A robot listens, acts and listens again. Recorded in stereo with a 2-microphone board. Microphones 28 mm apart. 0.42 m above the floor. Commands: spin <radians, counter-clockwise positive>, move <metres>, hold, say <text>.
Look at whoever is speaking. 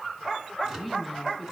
spin -0.52
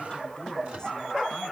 hold
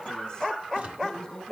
spin 0.35
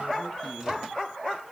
hold
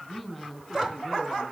say Facing the woman speaking, over 4 m away.